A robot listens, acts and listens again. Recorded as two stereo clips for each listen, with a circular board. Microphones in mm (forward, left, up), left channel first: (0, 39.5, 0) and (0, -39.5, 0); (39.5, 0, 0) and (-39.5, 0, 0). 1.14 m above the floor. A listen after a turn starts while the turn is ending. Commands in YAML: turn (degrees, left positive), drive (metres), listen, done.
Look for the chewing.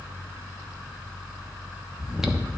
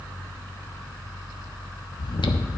done: "Found it: chewing, straight ahead."